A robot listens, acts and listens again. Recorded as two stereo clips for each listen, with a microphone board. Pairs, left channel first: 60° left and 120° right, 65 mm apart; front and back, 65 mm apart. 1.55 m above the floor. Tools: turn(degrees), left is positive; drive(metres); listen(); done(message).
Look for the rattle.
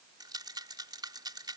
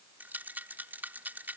turn(degrees=-115)
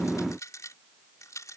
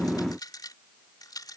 turn(degrees=20)
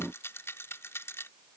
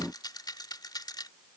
turn(degrees=10)
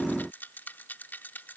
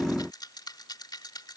done("Found it: a rattle, straight ahead.")